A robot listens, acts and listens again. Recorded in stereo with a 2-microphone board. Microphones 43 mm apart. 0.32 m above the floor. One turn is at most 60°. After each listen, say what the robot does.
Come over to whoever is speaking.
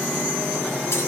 Keep listening.
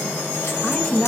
Turn 30° left.
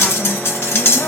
Keep listening.
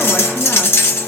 Keep listening.
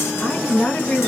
Turn 60° left.
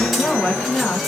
Turn 45° left.
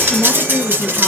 Drive 1.0 m forward.
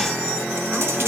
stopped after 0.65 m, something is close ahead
Keep listening.
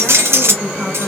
Turn 10° right.
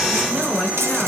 I am next to the woman speaking.